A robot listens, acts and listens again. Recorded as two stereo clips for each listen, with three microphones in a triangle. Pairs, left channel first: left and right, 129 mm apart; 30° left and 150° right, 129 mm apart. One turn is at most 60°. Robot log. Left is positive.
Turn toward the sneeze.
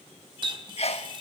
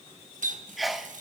note: The sneeze: 120° left.
cmd yaw +60
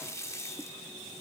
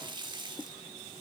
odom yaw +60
note: Nothing new. It was at 60° left.
cmd yaw +60
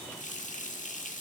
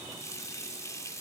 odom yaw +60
end: Facing where the sneeze came from. I can't hear it now.